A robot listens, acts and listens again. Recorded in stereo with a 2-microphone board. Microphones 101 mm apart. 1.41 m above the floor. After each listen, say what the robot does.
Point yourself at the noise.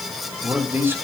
Turn 20° right.
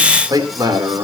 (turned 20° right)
Turn 140° right.
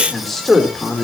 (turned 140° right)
Facing the man speaking.